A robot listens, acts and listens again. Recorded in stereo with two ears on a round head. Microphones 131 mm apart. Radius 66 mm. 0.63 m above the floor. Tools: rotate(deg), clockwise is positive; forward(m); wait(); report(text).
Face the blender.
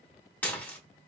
wait()
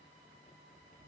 wait()
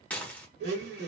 rotate(90)
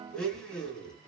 report("Facing the blender, 1 to 2 m away.")